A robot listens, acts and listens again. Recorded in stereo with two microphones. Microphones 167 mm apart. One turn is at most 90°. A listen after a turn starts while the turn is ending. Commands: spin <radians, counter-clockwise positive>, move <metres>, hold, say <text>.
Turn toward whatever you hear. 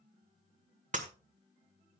spin -0.79
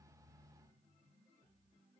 hold
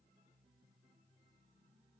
say I heard breaking glass, but can't make it out now. It was about straight ahead or 90° right.